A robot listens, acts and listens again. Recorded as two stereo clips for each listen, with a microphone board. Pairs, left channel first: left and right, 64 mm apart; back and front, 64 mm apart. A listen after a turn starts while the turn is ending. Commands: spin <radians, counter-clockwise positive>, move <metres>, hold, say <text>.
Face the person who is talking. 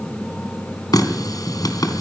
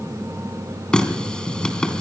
hold
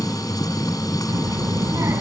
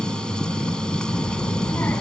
spin -2.18
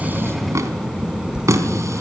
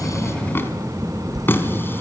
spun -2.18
spin -0.35
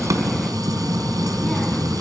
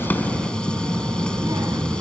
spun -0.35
say Facing the child speaking, 2 to 4 m away.